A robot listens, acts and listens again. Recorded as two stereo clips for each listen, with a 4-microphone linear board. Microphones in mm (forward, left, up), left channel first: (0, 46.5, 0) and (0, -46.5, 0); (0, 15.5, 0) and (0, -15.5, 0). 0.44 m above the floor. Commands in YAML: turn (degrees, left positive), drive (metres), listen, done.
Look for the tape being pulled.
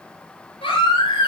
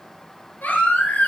listen: true
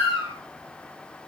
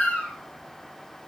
listen: true
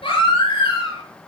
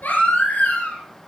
done: "I can't make out tape being pulled, only a baby crying."